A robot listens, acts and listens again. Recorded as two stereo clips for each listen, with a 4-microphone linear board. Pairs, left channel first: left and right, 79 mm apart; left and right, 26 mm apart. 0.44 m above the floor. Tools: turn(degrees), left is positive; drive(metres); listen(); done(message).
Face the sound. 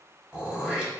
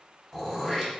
turn(degrees=-30)
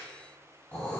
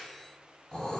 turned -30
turn(degrees=20)
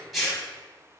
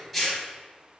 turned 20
done("Facing the throat clearing, 1 to 2 m away.")